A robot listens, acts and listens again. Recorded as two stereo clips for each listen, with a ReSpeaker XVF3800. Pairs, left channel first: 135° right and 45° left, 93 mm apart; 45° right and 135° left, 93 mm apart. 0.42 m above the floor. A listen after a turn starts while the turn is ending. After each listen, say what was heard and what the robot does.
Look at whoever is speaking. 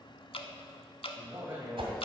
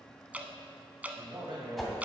The man speaking: 105° left. Turn 105° left.
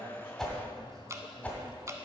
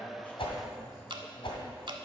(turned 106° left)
Keep listening.
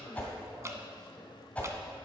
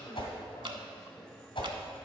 Keep listening.
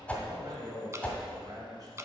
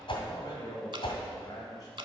Found it: a man speaking, straight ahead.